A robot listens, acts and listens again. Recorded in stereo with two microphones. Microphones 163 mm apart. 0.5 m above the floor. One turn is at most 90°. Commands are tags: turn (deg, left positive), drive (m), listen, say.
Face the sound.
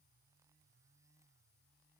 <listen/>
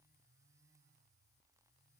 <listen/>
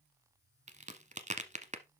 <turn deg="-45"/>
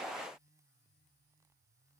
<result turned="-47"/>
<listen/>
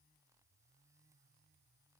<say>I heard a crack, but can't make it out now. It was about straight ahead or 85° right.</say>